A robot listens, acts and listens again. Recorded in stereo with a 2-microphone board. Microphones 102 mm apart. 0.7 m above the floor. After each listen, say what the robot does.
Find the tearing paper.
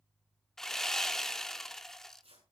Turn 90° right.
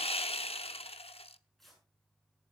Facing the tearing paper, over 4 m away.